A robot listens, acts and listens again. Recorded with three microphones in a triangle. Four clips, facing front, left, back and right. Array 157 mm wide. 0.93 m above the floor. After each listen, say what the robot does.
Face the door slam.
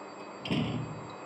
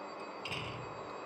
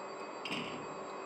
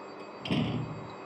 Turn 60° right.
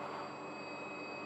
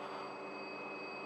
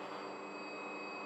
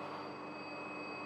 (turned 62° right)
I heard a door slam from this way, but can't make it out now.